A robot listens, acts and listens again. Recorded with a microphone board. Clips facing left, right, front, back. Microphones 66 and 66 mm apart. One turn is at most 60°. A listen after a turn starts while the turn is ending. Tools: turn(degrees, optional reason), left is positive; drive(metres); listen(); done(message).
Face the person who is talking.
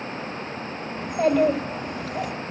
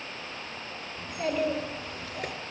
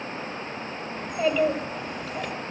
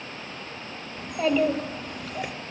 turn(degrees=60, reason="The child speaking: 85° left.")
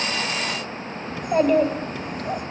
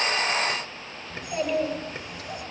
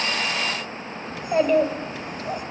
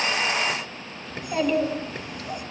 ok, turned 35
turn(degrees=50, reason="The child speaking is now 50° left.")
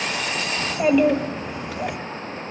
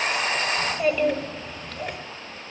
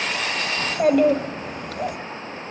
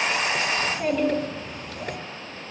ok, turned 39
turn(degrees=10, reason="The child speaking is now 10° left.")
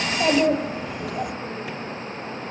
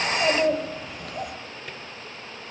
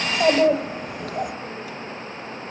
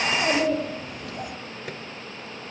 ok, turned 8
done("Facing the child speaking, 1 to 2 m away.")